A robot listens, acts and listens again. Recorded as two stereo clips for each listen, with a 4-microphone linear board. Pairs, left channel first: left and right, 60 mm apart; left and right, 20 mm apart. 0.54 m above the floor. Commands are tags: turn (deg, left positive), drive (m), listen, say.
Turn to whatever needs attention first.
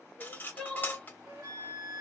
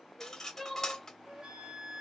<turn deg="30"/>
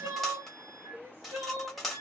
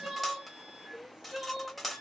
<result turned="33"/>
<turn deg="-35"/>
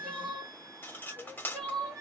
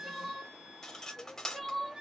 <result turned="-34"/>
<say>Facing the crying, 1 to 2 m away.</say>